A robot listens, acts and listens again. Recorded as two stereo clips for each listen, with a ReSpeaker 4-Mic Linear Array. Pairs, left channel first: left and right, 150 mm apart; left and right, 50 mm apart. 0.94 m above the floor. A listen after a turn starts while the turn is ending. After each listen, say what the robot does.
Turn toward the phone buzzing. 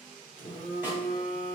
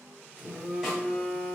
Turn 60° right.
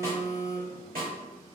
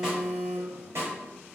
Turn 45° right.
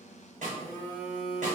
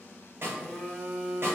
Turn 10° left.
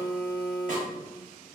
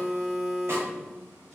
Facing the phone buzzing.